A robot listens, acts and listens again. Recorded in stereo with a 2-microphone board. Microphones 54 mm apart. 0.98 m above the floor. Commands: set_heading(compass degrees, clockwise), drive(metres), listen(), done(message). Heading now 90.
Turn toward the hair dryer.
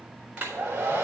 set_heading(115)
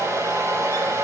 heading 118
set_heading(248)
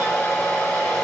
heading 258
set_heading(248)
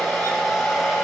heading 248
done("Found it: a hair dryer, straight ahead, over 4 m away.")